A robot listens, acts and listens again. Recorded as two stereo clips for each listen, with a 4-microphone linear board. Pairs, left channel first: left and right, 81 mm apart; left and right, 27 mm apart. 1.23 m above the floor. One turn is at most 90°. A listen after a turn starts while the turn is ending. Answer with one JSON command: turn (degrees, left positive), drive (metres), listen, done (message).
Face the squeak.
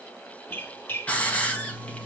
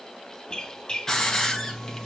{"turn": 25}
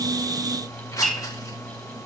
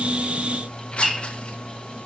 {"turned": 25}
{"done": "Facing the squeak, 1 to 2 m away."}